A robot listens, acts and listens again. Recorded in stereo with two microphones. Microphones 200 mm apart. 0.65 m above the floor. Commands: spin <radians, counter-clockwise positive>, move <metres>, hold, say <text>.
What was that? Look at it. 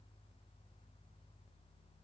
hold
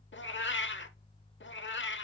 spin 1.22
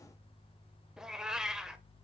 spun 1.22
say Found it: a cat meowing, straight ahead.